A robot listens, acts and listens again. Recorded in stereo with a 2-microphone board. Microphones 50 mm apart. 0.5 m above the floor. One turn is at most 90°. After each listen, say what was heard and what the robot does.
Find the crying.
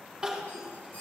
The crying: about 15° right or 165° right. Turn 15° right.
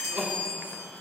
So it is at 150° right. Turn 90° right.
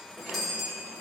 Nothing new. It was at 60° right. Turn 60° right.
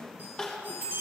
The crying is now 20° left. Turn 20° left.
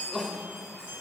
Found it: crying, straight ahead.